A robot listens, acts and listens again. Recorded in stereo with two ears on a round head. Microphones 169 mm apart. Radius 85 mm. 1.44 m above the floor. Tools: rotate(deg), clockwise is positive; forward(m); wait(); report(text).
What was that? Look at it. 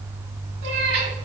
rotate(60)
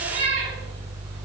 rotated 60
rotate(60)
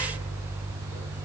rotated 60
wait()
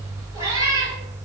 rotate(20)
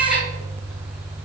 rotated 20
report("Facing the cat meowing.")